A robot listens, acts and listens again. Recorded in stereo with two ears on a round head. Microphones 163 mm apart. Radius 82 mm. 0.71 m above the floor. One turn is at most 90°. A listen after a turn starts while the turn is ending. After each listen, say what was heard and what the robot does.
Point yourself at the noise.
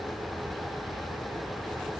Keep listening.
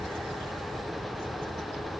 Keep listening.
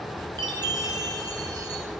The chime: about 25° right or 155° right. Turn 25° right.
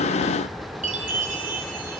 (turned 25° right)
So it is at 135° right. Turn 90° right.
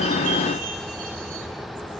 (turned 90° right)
Nothing new. It was at 45° right. Turn 45° right.
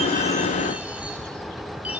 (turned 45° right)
Keep listening.
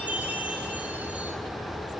The chime is now 10° right. Turn 10° right.
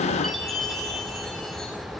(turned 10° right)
Facing the chime.